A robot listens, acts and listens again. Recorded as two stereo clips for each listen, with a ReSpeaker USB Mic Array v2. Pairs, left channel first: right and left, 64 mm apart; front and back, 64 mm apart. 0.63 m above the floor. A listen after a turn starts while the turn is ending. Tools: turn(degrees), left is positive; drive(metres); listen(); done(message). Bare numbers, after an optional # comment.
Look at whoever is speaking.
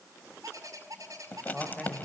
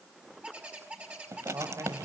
# The man speaking: straight behind.
turn(180)
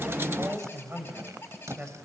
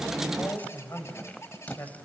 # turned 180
# The man speaking is now 30° left.
turn(30)
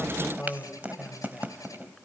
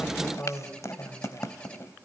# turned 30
done("Found it: a man speaking, straight ahead.")